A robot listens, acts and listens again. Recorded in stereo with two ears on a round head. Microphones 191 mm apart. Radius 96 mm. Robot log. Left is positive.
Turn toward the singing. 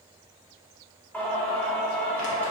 cmd yaw +30
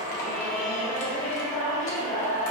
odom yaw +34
note: So it is at 140° left.
cmd yaw +140
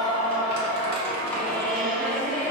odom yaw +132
note: The singing is now 10° left.
cmd yaw +10
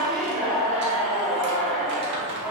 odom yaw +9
end: Facing the singing.